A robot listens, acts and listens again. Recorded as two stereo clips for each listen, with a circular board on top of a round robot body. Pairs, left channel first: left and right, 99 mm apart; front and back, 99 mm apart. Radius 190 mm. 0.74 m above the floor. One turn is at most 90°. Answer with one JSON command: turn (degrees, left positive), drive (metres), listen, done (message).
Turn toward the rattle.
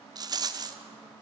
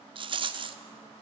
{"turn": -90}
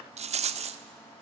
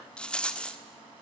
{"turn": -80}
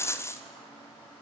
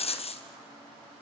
{"turn": 25}
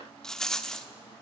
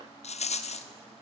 {"done": "Found it: a rattle, straight ahead, 1 to 2 m away."}